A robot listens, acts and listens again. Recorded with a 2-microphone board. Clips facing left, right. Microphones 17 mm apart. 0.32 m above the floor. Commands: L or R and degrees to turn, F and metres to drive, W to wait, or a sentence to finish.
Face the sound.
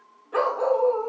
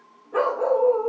L70
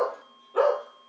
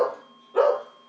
Found it: a dog barking, straight ahead, 2 to 4 m away.